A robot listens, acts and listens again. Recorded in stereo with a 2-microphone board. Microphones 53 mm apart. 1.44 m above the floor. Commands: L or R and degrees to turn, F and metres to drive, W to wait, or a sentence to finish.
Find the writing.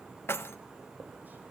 R35
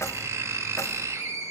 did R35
R105
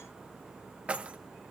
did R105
W
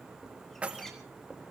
Facing the writing.